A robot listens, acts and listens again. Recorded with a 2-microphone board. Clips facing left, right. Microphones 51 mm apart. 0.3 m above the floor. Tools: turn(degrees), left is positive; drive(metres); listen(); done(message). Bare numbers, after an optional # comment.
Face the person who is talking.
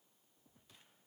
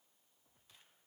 listen()
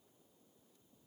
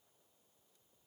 listen()
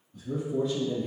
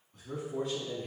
# The man speaking: about 70° right or 110° right.
turn(-70)
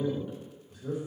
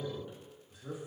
done("Facing the man speaking, 2 to 4 m away.")